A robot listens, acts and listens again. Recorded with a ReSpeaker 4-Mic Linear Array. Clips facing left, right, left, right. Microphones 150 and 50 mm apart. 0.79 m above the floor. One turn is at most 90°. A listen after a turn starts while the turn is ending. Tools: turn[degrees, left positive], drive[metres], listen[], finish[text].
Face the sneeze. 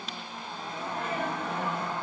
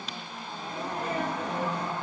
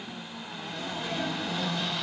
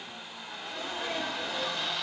Thought: The sneeze: about 40° right or 140° right.
Action: turn[-40]
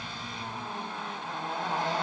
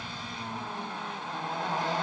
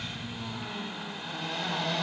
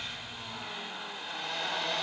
Action: listen[]
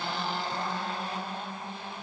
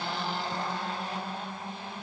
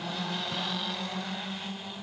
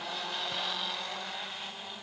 Action: finish[I heard a sneeze, but can't make it out now. It was about straight ahead or 100° right.]